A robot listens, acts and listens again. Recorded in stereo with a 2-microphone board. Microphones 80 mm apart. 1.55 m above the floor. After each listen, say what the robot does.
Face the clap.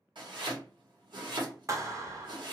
Turn 40° right.
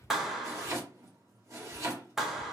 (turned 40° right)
Found it: a clap, straight ahead.